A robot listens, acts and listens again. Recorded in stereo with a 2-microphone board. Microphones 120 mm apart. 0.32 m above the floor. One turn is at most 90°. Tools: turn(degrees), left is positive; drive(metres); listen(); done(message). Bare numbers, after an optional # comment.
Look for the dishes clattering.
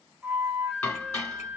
# The dishes clattering: about 20° left or 160° left.
turn(20)
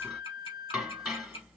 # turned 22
done("Facing the dishes clattering, 1 to 2 m away.")